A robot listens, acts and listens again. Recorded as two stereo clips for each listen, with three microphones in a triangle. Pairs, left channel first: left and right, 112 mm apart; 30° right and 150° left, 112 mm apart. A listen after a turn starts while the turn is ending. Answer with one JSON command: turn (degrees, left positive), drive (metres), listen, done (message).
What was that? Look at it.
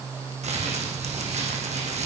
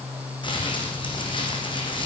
{"turn": -75}
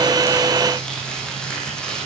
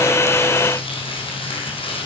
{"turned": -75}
{"turn": 10}
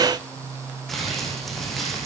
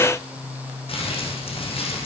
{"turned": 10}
{"done": "Found it: crumpling, straight ahead, 2 to 4 m away."}